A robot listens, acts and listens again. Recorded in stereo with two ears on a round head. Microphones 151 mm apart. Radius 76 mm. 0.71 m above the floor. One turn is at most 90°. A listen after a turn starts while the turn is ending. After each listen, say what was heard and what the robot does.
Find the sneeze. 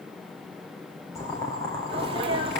The sneeze: about 30° right or 150° right. Turn 30° right.
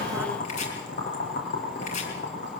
Keep listening.
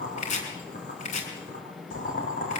I heard a sneeze, but can't make it out now. It was about straight ahead or 120° right.